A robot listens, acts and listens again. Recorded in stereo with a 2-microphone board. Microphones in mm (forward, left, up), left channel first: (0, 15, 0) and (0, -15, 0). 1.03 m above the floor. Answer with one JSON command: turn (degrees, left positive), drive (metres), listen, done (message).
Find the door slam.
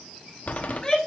{"turn": 50}
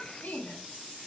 {"listen": true}
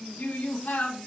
{"done": "I heard a door slam, but can't make it out now. It was about straight ahead or 80° left."}